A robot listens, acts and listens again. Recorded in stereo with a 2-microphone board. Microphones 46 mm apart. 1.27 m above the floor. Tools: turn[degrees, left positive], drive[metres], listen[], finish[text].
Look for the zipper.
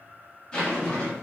Thought: The zipper: about 15° left or 165° left.
Action: turn[15]
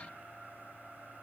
Action: listen[]
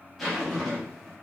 Action: finish[Facing the zipper.]